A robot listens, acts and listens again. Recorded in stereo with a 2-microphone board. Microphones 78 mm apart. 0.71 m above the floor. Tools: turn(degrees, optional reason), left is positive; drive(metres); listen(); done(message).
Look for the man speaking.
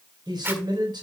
turn(degrees=-65, reason="The man speaking: about 65° right or 115° right.")
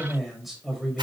done("Facing the man speaking, over 4 m away.")